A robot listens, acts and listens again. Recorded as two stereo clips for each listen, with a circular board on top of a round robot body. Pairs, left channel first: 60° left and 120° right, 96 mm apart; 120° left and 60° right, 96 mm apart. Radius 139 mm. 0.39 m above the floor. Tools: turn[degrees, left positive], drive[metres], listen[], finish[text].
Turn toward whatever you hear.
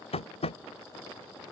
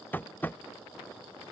Thought: The tapping: 50° left.
Action: turn[50]
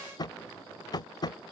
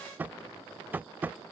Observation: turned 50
Thought: The tapping is now 15° left.
Action: turn[15]
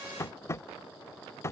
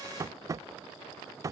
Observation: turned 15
Action: finish[Facing the tapping.]